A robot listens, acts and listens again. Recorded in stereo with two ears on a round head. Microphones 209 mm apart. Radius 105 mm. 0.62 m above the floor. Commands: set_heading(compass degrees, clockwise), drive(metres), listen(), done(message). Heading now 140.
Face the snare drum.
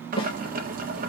set_heading(120)
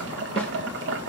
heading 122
listen()
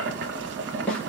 done("Found it: a snare drum, straight ahead.")